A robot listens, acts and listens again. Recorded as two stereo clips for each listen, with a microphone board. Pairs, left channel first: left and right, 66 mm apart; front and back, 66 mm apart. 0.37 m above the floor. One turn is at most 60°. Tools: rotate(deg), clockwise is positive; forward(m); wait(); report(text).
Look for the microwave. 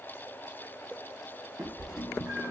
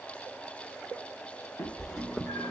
rotate(-60)
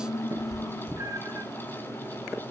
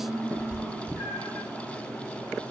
rotate(-60)
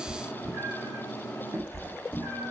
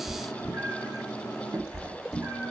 rotate(-25)
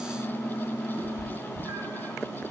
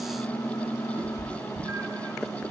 report("Found it: a microwave, straight ahead, 2 to 4 m away.")